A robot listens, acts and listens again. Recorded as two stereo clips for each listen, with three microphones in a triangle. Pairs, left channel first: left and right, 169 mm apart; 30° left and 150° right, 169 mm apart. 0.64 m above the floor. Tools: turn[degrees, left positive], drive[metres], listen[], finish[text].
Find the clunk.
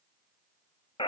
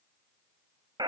Action: listen[]
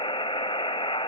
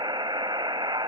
Action: listen[]
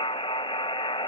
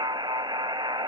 Action: finish[I can't make out a clunk, only a buzzer.]